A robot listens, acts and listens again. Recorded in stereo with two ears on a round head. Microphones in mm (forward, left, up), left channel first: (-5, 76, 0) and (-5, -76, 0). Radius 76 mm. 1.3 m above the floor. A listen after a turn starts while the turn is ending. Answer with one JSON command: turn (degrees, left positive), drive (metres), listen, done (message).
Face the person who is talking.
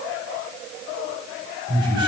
{"turn": -70}
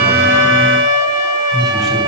{"done": "Facing the man speaking."}